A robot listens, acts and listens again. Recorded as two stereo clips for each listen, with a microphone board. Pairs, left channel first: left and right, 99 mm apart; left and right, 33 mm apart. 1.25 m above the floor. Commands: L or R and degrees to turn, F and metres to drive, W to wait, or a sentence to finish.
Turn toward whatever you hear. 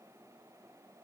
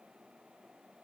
W
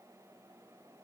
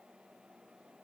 W
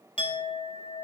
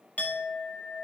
L55
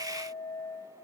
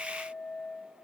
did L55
L60
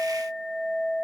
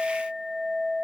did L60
R10
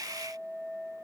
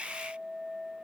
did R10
Found it: a clink, straight ahead, 1 to 2 m away.